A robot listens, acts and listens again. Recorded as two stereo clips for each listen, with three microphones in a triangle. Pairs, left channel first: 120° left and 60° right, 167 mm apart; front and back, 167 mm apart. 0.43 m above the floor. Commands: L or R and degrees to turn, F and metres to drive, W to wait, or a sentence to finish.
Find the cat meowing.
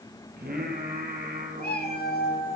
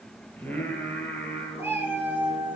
L100
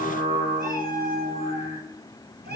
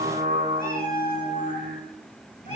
R45
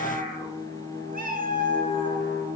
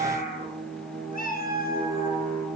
R25
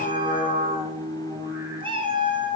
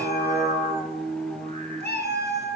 Facing the cat meowing, 2 to 4 m away.